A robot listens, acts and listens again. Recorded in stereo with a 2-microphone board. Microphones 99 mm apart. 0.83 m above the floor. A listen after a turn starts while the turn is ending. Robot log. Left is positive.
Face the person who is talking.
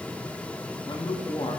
note: The man speaking: about 60° left or 120° left.
cmd yaw +60
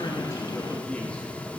cmd idle
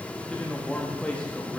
note: So it is at 15° left.
cmd yaw +15
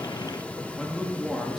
end: Found it: a man speaking, straight ahead.